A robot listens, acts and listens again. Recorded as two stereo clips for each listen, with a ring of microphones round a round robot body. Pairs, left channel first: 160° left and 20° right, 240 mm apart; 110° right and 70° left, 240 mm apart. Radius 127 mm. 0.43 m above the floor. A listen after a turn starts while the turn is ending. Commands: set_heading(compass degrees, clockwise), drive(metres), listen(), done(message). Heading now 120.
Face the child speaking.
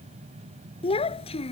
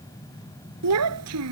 set_heading(30)
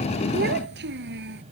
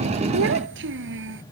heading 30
set_heading(5)
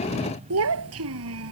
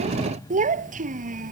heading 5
set_heading(355)
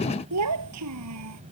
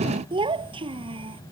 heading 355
done("Facing the child speaking.")